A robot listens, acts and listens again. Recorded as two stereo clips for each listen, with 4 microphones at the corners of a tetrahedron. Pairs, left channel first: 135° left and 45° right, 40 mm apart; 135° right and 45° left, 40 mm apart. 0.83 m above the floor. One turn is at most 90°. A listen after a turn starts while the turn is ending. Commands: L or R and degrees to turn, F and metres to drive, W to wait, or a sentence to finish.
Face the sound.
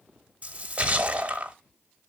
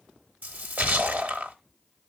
L10
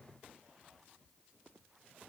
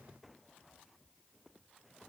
Facing where the splash came from. I can't hear it now.